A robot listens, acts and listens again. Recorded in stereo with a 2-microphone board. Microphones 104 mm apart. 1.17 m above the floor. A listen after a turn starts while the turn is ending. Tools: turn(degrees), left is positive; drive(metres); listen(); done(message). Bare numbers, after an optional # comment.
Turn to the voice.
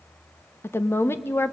# The woman speaking: about 25° left or 155° left.
turn(25)
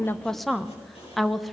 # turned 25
done("Found it: a woman speaking, straight ahead.")